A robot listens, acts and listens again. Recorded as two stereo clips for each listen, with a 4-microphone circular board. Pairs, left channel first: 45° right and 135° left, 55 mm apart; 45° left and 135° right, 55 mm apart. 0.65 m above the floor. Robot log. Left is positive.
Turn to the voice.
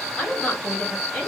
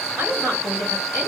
note: The woman speaking: 110° right.
cmd yaw -110
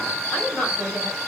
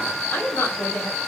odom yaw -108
end: Found it: a woman speaking, straight ahead.